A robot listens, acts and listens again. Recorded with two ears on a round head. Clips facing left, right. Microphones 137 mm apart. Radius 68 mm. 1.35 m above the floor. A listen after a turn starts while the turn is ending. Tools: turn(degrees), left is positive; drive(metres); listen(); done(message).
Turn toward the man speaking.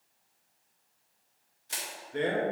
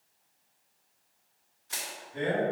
turn(degrees=70)
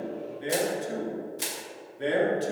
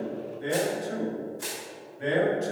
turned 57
turn(degrees=40)
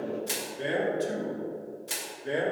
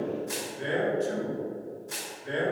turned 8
turn(degrees=40)
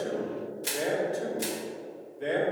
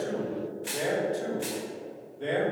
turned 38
done("Found it: a man speaking, straight ahead.")